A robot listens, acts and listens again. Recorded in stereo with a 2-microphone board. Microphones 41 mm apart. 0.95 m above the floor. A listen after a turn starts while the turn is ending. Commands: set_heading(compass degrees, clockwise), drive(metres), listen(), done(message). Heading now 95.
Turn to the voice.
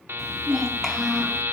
set_heading(65)
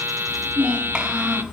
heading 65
set_heading(90)
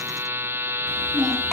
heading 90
done("Found it: a child speaking, straight ahead.")